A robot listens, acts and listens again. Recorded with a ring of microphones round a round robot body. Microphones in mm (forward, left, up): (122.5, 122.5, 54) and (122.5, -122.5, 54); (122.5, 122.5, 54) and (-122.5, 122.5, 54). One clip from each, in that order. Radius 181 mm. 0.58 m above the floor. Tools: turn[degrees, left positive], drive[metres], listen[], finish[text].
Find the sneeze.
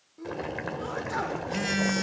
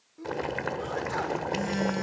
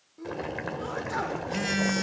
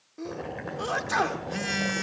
Thought: The sneeze: straight behind.
Action: turn[180]
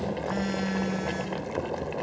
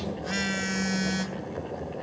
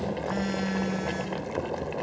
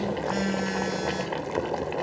Action: finish[I heard a sneeze from this way, but can't make it out now.]